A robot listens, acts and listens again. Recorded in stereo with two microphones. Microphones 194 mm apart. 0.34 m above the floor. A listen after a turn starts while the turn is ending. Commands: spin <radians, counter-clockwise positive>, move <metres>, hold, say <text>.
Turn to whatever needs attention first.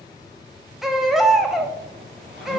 spin 0.52
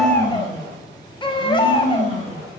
spin 2.62
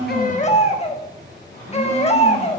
spin 0.70
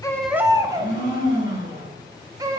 spin -0.35
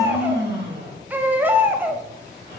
spin -0.17
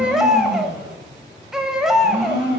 say Found it: a baby crying, straight ahead.